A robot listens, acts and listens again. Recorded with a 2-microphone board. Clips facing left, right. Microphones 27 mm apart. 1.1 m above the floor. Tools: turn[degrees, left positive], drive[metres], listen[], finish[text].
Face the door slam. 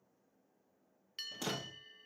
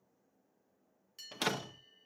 Action: turn[-90]
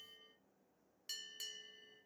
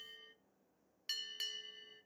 Action: finish[I heard a door slam from this way, but can't make it out now.]